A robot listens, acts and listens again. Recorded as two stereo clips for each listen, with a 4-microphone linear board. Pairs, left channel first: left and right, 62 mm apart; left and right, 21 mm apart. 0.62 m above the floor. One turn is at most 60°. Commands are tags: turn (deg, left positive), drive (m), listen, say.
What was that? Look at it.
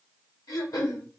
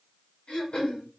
<turn deg="60"/>
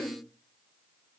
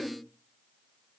<turn deg="35"/>
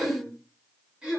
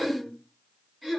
<turn deg="-15"/>
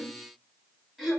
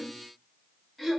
<say>Facing the throat clearing.</say>